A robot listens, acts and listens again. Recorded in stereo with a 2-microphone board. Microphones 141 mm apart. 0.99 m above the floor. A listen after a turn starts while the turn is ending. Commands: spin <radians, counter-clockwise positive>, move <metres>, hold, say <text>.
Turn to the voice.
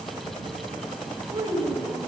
spin -0.52
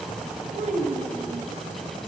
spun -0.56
spin -2.09
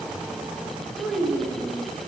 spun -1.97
say Facing the child speaking.